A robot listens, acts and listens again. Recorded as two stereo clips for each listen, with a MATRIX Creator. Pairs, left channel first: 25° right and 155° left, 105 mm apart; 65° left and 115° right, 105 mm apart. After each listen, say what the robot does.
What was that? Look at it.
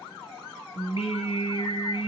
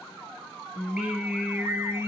Turn 50° right.
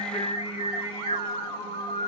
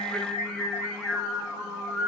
Turn 30° right.
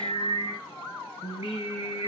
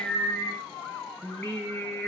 Turn 15° right.
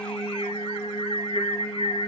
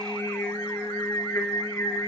Found it: singing, straight ahead.